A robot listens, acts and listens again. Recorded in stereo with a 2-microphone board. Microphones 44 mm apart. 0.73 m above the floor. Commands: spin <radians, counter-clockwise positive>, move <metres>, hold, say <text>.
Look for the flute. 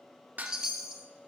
hold
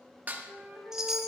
spin -0.87
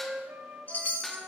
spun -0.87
spin -1.31
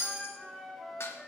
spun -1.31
say Found it: a flute, straight ahead, 1 to 2 m away.